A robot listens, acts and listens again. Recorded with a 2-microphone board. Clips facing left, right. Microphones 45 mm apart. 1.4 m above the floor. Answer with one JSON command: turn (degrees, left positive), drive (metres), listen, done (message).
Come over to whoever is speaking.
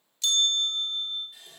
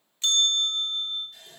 {"listen": true}
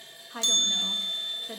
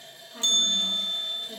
{"turn": 90}
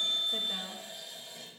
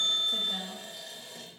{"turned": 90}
{"drive": 1.0}
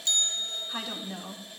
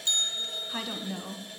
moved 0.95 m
{"drive": 1.0}
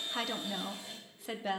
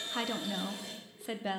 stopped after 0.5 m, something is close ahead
{"done": "Arrived at the woman speaking, straight ahead."}